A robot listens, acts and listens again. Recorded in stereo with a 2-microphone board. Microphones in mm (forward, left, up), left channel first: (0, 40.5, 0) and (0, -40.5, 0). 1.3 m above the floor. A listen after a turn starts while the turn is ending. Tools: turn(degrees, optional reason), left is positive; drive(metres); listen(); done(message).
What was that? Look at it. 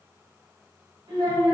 turn(degrees=-75, reason="The child speaking: about 75° right or 105° right.")
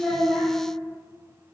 listen()
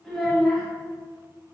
done("Facing the child speaking, 1 to 2 m away.")